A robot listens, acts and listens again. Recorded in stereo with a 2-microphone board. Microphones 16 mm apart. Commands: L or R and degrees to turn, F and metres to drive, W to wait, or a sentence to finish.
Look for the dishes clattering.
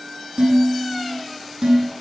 R75
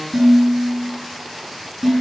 Found it: dishes clattering, straight ahead.